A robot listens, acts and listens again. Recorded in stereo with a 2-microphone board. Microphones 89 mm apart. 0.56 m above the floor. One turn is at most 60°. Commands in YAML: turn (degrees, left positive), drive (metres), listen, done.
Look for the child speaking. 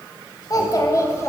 turn: 35
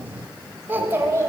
turn: -30
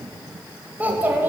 turn: -25
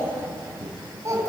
turn: -35
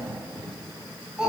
turn: -10
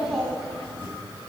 done: "Found it: a child speaking, straight ahead."